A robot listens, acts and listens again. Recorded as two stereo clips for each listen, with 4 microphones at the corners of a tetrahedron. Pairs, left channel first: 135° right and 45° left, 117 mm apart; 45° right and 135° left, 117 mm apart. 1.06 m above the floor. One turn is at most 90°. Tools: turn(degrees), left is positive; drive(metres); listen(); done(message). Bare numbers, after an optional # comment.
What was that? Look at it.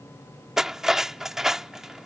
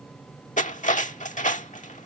# The cutlery clinking: 40° right.
turn(-40)
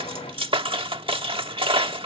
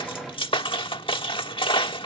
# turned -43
done("Found it: cutlery clinking, straight ahead.")